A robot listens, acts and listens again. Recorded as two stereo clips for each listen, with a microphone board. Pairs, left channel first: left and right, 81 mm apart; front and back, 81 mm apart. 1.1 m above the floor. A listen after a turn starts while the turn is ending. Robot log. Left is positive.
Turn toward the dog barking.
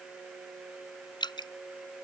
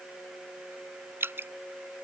cmd idle
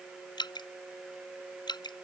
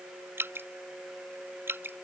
cmd idle
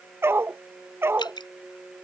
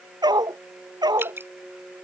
note: The dog barking: 150° right.
cmd yaw -150
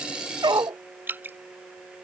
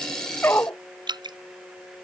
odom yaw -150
note: The dog barking is now 65° right.
cmd yaw -65
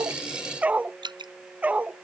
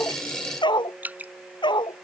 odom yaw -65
note: The dog barking is now 20° right.
cmd yaw -20
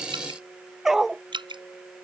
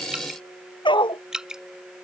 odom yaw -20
end: Facing the dog barking.